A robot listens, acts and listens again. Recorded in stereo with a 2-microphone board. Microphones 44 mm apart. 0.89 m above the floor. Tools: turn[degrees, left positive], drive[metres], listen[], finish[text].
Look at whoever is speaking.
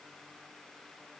Action: listen[]
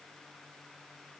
Action: listen[]
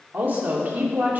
Thought: The woman speaking: about 40° right or 140° right.
Action: turn[-40]
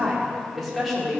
Action: finish[Facing the woman speaking.]